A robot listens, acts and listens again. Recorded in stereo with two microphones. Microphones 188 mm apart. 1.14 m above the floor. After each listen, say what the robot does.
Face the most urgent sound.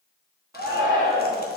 Turn 20° right.
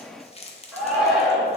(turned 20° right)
Facing the shout.